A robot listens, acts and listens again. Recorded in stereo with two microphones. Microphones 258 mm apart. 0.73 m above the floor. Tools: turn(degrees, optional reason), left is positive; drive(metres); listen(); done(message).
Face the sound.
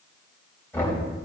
turn(degrees=30)
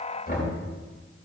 turn(degrees=140, reason="So it is at 140° left.")
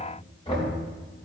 turn(degrees=20, reason="The knocking is now 20° left.")
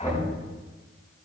turn(degrees=10, reason="The knocking is now 10° left.")
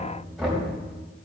done("Facing the knocking.")